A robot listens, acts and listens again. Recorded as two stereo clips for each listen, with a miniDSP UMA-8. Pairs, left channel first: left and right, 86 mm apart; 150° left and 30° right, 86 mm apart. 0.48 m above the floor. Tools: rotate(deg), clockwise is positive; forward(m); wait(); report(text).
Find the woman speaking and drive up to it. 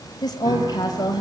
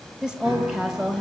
rotate(-50)
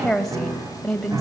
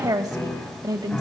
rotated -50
forward(1.0)
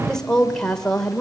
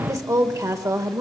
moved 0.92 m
rotate(-10)
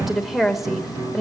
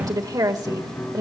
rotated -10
forward(1.0)
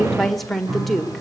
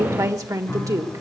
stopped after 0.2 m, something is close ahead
report("I am next to the woman speaking.")